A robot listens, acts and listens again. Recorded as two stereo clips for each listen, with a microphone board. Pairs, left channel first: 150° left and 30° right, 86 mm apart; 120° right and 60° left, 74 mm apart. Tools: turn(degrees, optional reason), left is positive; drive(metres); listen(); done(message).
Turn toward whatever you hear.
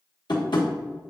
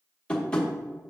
turn(degrees=165, reason="The tapping: 165° left.")
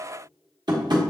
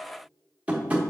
done("Found it: tapping, straight ahead, 1 to 2 m away.")